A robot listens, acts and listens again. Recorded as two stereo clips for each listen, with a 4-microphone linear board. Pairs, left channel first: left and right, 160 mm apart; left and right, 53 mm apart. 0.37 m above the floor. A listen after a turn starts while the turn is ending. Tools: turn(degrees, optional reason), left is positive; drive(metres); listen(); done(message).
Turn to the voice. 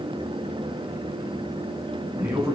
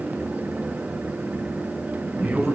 turn(degrees=-15, reason="The man speaking: about 15° right or 165° right.")
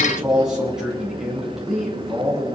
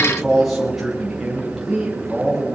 turn(degrees=-30)
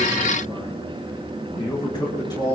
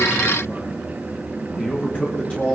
turn(degrees=25, reason="So it is at 25° left.")
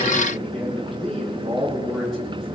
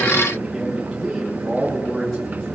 done("Found it: a man speaking, straight ahead.")